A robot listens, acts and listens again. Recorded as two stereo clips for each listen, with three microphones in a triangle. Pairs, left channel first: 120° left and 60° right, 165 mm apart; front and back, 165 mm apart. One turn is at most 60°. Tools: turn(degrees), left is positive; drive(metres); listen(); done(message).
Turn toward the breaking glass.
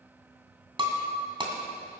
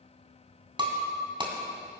turn(degrees=-60)
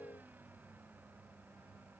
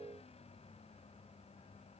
turn(degrees=-60)
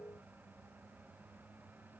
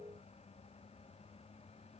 done("I heard breaking glass from this way, but can't make it out now.")